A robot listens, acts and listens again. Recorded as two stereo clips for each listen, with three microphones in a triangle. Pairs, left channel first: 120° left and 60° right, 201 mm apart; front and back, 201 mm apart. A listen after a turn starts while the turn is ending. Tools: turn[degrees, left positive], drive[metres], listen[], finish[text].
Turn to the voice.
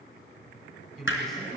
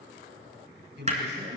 Thought: The man speaking: 150° right.
Action: turn[-150]
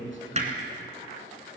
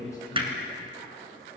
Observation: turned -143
Thought: Nothing new. It was at 10° right.
Action: turn[-10]
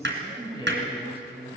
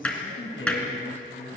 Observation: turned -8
Action: finish[Found it: a man speaking, straight ahead.]